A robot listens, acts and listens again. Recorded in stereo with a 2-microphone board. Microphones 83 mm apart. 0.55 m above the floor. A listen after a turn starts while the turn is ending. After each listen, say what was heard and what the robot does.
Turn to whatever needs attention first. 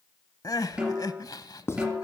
The crying: about 50° left or 130° left. Turn 50° left.
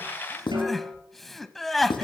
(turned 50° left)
Facing the crying.